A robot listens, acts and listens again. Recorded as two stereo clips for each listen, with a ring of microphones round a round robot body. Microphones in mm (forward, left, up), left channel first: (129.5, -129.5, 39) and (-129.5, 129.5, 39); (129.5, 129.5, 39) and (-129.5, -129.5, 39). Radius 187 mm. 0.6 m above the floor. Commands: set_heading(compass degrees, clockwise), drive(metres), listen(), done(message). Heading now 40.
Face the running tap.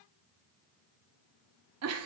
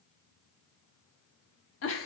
listen()
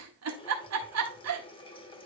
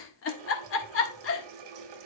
set_heading(160)
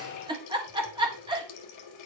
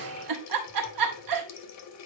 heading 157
done("Facing the running tap, 1 to 2 m away.")